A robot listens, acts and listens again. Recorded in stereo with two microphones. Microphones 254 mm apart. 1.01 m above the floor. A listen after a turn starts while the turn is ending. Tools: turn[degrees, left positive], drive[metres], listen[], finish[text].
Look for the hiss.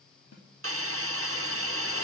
Thought: The hiss: about 60° right or 120° right.
Action: turn[-60]
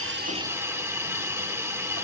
Thought: So it is at 10° right.
Action: turn[-10]
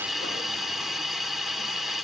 Action: finish[Found it: a hiss, straight ahead, 1 to 2 m away.]